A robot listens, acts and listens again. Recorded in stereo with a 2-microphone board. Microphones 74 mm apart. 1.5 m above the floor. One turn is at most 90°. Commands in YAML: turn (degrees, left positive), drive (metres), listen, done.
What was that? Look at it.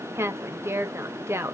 turn: -35
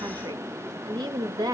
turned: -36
turn: -90
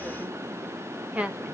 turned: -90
turn: -20
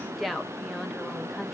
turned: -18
done: "Found it: a woman speaking, straight ahead."